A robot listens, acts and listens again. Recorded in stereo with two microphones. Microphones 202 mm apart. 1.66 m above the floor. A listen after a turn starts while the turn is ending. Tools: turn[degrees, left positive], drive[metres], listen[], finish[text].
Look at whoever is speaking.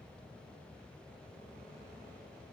Action: listen[]
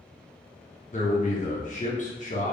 Thought: The man speaking: about 40° left or 140° left.
Action: turn[40]
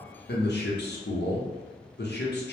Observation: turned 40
Thought: So it is at 95° left.
Action: turn[95]
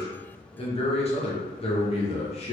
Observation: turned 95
Thought: The man speaking is now 35° left.
Action: turn[35]
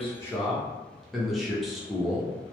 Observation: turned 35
Action: finish[Found it: a man speaking, straight ahead.]